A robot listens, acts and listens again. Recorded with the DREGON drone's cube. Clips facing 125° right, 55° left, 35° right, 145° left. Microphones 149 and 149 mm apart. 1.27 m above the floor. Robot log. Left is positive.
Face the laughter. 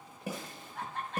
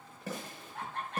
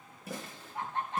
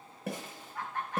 note: The laughter: 30° left.
cmd yaw +30
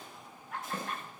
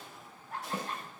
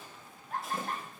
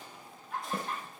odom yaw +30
end: Facing the laughter, over 4 m away.